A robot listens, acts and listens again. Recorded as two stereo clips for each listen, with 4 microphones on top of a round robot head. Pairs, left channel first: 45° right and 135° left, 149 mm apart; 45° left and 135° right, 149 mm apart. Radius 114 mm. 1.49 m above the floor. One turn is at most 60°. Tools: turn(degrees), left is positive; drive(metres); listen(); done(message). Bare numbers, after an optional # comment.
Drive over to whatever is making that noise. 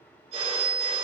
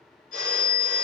# The phone ringing: 80° left.
turn(60)
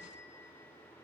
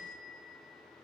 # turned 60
# Nothing new. It was at 20° left.
turn(20)
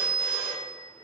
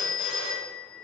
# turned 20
# The phone ringing is now 25° left.
turn(25)
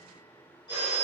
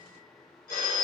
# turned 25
# The phone ringing is now 15° left.
turn(15)
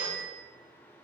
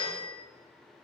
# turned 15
drive(1.0)
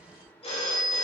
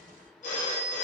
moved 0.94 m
drive(1.0)
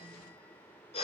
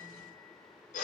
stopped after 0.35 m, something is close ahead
done("Arrived at the phone ringing, straight ahead.")